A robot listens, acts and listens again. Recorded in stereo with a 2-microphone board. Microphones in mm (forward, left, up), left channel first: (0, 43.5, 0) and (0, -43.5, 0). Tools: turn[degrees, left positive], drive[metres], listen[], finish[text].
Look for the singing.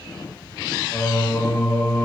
Thought: The singing: about 20° left or 160° left.
Action: turn[20]
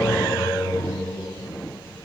Thought: So it is at 140° left.
Action: turn[140]
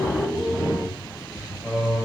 Action: finish[Found it: singing, straight ahead, 2 to 4 m away.]